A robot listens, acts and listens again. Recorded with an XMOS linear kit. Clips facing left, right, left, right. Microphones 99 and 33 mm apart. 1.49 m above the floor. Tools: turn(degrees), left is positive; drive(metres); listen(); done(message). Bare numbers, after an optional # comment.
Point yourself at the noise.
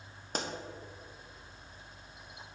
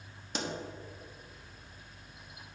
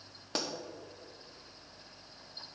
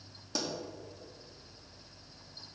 # The pop: about 45° left or 135° left.
turn(45)
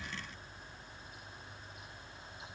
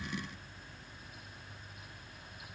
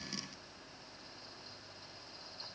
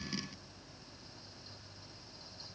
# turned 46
listen()
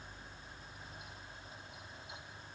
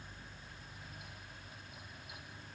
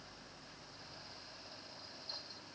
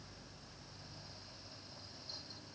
done("I heard a pop, but can't make it out now. It was about straight ahead or 90° left.")